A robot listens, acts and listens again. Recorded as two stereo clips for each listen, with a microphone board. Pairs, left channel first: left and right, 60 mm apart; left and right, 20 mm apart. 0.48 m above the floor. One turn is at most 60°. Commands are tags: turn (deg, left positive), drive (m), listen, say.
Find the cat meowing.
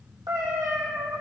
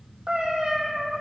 <turn deg="-60"/>
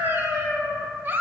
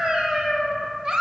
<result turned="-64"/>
<turn deg="-55"/>
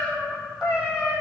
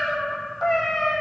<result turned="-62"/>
<turn deg="-15"/>
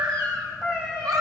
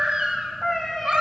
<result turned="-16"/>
<turn deg="-10"/>
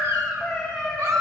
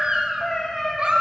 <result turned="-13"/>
<say>Facing the cat meowing.</say>